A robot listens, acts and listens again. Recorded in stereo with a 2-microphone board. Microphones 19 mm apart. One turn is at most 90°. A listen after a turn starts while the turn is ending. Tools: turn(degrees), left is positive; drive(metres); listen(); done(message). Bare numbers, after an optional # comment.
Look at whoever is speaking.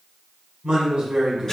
# The man speaking: about 55° right or 125° right.
turn(-55)
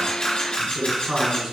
# So it is at 30° right.
turn(-30)
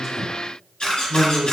done("Facing the man speaking.")